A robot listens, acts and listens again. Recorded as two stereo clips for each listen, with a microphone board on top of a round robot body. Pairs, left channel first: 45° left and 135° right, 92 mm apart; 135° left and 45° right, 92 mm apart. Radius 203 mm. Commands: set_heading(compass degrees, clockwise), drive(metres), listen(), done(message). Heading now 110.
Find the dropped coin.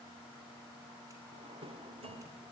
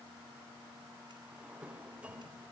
listen()
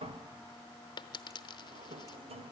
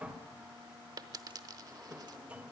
done("Found it: a dropped coin, straight ahead.")